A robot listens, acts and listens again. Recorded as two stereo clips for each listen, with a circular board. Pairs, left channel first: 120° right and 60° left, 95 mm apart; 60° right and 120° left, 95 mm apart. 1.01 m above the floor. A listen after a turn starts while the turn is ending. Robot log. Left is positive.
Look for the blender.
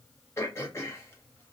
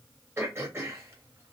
cmd idle
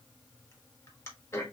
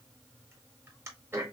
cmd idle
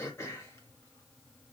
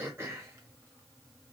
end: I can't make out a blender, only throat clearing.